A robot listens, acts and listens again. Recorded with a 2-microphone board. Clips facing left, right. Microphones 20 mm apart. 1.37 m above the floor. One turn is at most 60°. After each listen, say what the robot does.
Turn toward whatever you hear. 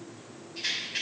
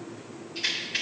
Turn 40° right.
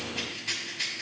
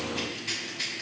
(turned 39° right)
Found it: a rattle, straight ahead.